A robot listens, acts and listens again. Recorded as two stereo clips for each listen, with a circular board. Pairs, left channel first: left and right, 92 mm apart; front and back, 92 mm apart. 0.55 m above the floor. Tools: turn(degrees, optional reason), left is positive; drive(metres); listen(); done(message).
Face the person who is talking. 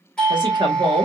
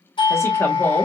turn(degrees=-60, reason="The woman speaking: 60° right.")
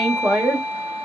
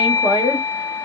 turn(degrees=-20, reason="The woman speaking is now 20° right.")
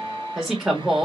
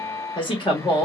done("Facing the woman speaking, 1 to 2 m away.")